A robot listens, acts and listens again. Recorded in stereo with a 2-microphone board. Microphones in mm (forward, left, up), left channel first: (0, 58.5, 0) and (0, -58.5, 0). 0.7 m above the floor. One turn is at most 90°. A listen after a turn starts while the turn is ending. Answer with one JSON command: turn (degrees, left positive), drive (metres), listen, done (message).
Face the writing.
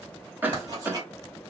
{"turn": -35}
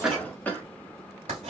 {"turn": -90}
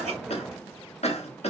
{"turn": -20}
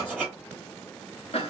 {"turn": -15}
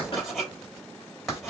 {"done": "Facing the writing."}